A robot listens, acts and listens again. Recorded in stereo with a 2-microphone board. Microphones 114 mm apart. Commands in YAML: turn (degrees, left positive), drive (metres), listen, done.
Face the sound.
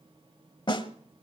turn: 45
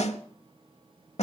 turn: 85
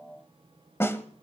turn: 20
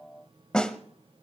done: "Facing the snare drum."